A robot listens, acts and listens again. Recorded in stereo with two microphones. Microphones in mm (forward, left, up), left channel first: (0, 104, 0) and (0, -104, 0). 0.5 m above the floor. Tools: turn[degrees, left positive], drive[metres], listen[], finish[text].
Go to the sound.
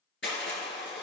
Thought: The crushing: about 65° left or 115° left.
Action: turn[65]
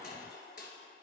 Thought: So it is at 50° left.
Action: turn[50]
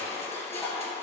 Thought: The crushing is now 15° left.
Action: turn[15]
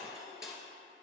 Action: drive[1.0]
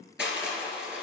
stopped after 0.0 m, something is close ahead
Action: finish[Blocked. The crushing is further on, straight ahead.]